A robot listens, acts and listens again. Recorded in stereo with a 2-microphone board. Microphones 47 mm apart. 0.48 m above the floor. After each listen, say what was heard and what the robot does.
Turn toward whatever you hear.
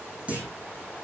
The clunk: about 30° right or 150° right. Turn 30° right.
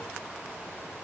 Keep listening.
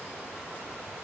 I heard a clunk, but can't make it out now. It was about straight ahead or 120° right.